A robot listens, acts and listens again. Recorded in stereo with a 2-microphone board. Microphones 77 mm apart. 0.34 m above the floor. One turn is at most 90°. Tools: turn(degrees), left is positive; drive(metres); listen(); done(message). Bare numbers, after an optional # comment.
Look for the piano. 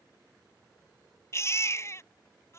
listen()
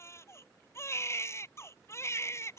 listen()
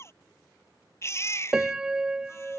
turn(-30)
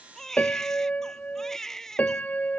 # So it is at 20° left.
turn(20)
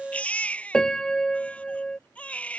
# The piano is now 10° left.
turn(10)
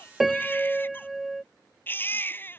done("Facing the piano.")